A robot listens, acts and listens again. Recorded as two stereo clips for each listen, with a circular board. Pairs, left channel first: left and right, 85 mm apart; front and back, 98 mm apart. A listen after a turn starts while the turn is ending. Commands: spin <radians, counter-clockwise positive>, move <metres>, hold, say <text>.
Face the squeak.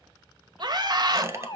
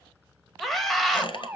spin -0.52
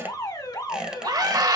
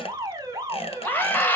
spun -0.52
hold
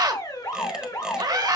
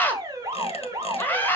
hold
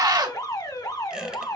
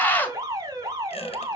say Facing where the squeak came from. I can't hear it now.